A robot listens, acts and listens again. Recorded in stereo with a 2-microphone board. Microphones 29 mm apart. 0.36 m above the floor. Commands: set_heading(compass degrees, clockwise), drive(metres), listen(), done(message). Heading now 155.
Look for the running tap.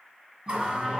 set_heading(190)
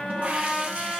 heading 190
set_heading(295)
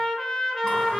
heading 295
listen()
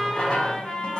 set_heading(265)
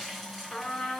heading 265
done("Facing the running tap, 1 to 2 m away.")